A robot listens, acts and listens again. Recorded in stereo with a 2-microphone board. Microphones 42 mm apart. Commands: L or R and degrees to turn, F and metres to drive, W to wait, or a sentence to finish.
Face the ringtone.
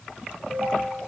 R90
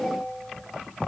L10
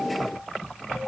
Found it: a ringtone, straight ahead, 2 to 4 m away.